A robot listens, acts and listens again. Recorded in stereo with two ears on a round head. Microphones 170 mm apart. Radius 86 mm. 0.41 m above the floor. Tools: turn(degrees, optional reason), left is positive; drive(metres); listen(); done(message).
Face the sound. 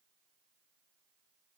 listen()
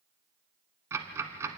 turn(degrees=-15, reason="The ticking: about 15° right or 165° right.")
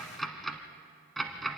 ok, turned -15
done("Found it: ticking, straight ahead.")